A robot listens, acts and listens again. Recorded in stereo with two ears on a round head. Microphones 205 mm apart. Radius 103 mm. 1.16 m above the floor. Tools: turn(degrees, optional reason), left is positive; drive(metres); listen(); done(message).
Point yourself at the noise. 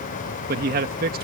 turn(degrees=-40, reason="The man speaking: about 40° right or 140° right.")
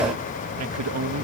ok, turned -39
turn(degrees=-95, reason="So it is at 95° right.")
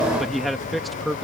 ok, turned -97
done("Found it: a man speaking, straight ahead.")